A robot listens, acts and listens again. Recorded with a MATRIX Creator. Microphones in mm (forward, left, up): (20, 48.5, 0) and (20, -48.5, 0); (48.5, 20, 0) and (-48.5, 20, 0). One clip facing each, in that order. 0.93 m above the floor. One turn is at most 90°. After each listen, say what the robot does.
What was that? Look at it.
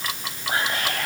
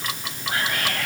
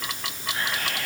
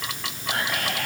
Turn 90° left.
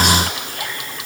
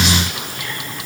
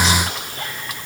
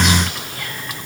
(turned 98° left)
Turn 55° left.
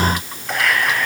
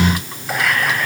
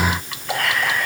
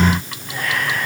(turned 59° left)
Found it: whispering, straight ahead, over 4 m away.